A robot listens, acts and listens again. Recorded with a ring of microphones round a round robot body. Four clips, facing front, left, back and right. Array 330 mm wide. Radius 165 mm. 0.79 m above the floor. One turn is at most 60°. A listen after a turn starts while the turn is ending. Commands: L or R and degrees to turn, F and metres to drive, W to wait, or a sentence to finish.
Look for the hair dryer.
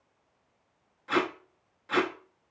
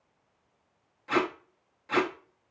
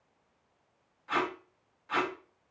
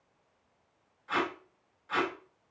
W
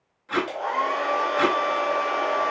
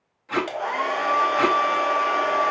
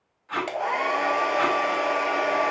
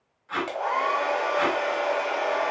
L60
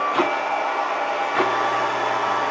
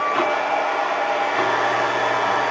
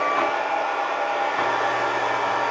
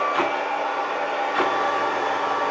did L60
L60
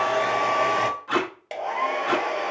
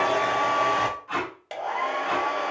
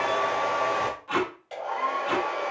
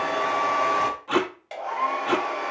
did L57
L30
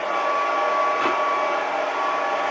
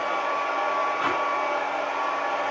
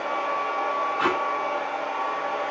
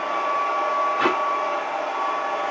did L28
Facing the hair dryer.